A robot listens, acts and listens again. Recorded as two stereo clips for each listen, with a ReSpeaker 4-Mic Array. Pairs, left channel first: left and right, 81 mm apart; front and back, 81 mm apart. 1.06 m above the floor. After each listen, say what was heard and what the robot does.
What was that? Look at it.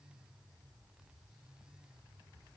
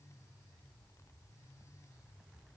Keep listening.
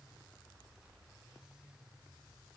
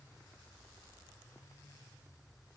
Keep listening.
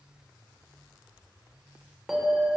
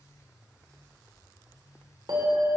The bell: 175° right. Turn 175° right.
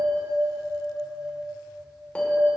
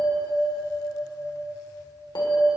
The bell is now 15° left. Turn 15° left.
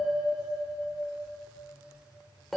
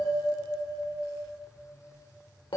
Found it: a bell, straight ahead, 2 to 4 m away.